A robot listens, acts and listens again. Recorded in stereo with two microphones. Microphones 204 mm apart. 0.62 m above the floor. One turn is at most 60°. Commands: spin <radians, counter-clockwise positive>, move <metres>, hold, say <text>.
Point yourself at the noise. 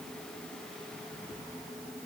hold
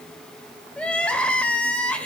spin 0.52
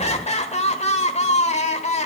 spin 1.05
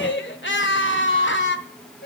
spin 1.05
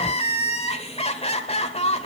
spin 0.52
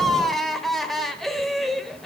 say Facing the crying.